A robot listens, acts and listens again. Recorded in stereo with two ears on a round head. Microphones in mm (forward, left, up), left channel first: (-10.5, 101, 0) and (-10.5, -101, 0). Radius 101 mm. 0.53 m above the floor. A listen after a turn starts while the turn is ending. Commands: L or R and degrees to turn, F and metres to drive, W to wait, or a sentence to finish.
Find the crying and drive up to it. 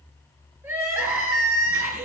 R30
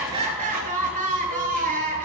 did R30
R140
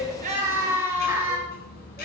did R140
R10
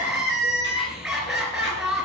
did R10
F1.0
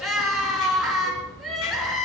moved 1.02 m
F1.0
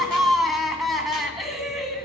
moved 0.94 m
F1.0
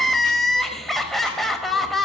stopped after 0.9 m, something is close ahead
Arrived at the crying, straight ahead.